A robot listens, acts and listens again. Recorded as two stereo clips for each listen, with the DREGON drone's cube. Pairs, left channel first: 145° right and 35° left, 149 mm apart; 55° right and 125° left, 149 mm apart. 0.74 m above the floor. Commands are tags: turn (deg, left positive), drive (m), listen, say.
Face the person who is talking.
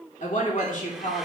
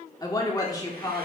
<turn deg="-120"/>
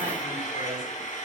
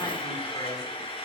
<listen/>
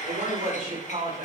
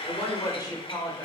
<say>Found it: a woman speaking, straight ahead.</say>